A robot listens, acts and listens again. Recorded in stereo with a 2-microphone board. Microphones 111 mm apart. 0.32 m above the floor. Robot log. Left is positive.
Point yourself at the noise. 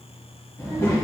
note: The child speaking: about 25° left or 155° left.
cmd yaw +25
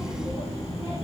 note: So it is at 125° left.
cmd yaw +125
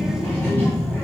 note: The child speaking is now 20° left.
cmd yaw +20
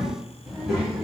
end: Facing the child speaking.